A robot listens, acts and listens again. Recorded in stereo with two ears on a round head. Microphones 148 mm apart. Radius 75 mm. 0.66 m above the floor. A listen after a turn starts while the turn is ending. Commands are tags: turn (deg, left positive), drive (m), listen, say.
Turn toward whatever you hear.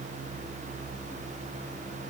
<listen/>
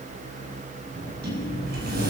<turn deg="-65"/>
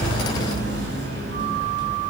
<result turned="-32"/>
<turn deg="-80"/>
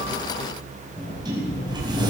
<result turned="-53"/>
<turn deg="-25"/>
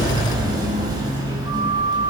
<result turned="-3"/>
<turn deg="-25"/>
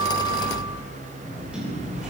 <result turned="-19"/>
<say>Facing the sliding door.</say>